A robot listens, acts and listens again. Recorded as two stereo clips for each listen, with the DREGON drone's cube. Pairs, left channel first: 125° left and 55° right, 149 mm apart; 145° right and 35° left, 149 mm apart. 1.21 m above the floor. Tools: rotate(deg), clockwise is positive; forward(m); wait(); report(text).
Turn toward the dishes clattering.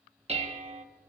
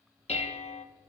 rotate(100)
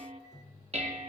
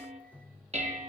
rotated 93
rotate(10)
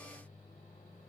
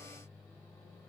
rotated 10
wait()
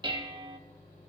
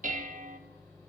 report("Facing the dishes clattering.")